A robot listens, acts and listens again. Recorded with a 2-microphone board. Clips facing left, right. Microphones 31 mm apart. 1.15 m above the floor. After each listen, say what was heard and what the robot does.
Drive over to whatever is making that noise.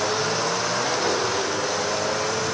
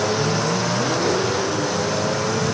Keep listening.
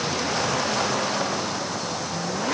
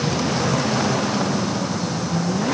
Keep listening.
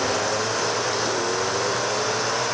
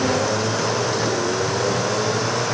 I can't make out anything to turn to.